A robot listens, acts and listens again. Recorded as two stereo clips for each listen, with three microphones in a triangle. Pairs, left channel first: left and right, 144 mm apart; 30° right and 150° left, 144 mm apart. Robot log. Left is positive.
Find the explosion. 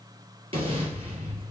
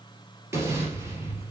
note: The explosion: 140° right.
cmd yaw -140
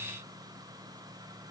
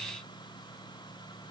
end: I heard an explosion from this way, but can't make it out now.